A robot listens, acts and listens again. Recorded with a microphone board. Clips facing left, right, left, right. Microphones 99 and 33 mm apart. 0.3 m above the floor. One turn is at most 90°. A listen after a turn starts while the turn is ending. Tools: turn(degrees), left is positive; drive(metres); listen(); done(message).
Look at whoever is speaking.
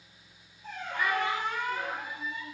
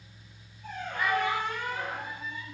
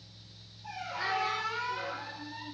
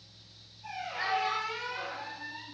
turn(degrees=-25)
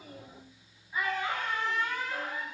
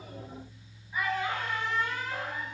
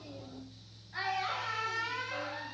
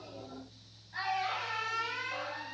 done("Facing the child speaking.")